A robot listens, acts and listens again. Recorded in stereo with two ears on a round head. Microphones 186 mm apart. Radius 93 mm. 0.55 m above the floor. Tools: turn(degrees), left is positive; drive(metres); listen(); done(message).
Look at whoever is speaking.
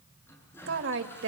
turn(degrees=-65)
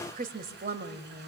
turn(degrees=-45)
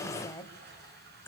turn(degrees=10)
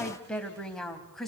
done("Found it: a woman speaking, straight ahead, 2 to 4 m away.")